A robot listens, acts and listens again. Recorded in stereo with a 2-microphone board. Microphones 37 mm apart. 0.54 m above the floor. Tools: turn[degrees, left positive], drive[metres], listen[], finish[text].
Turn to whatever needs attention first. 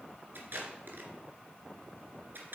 Action: listen[]
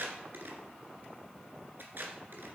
Action: listen[]
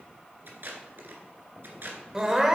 Thought: The crying: about 15° right or 165° right.
Action: turn[-15]
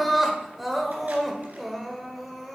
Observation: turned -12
Action: finish[Facing the crying, 1 to 2 m away.]